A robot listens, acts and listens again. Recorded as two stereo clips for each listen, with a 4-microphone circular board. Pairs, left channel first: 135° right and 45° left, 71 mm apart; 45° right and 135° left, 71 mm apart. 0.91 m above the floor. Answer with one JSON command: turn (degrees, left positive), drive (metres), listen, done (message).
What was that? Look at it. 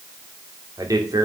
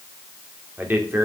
{"turn": 75}
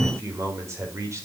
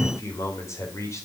{"done": "Facing the man speaking."}